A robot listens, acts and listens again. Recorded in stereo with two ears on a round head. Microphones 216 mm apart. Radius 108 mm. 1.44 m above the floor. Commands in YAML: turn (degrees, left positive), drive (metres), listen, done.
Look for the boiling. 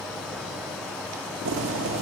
turn: -55
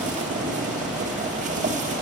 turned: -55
turn: -35
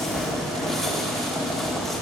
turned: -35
done: "Facing the boiling, 1 to 2 m away."